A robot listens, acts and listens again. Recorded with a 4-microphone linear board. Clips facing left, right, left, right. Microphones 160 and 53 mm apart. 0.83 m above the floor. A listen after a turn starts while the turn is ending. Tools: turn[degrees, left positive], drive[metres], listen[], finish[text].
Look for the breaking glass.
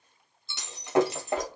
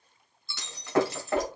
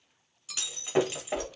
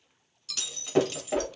Thought: The breaking glass: about 20° left or 160° left.
Action: turn[20]
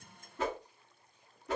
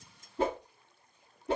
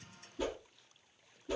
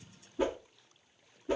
Action: listen[]
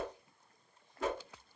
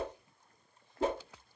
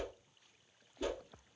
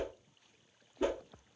Action: finish[I heard breaking glass, but can't make it out now. It was about straight ahead or 140° left.]